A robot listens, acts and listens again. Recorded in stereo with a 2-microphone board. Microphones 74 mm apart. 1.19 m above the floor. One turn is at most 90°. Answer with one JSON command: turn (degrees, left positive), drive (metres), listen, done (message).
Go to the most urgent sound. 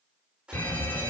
{"turn": 25}
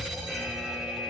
{"drive": 1.0}
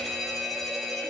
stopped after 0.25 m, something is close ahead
{"done": "Blocked. The alarm is further on, straight ahead."}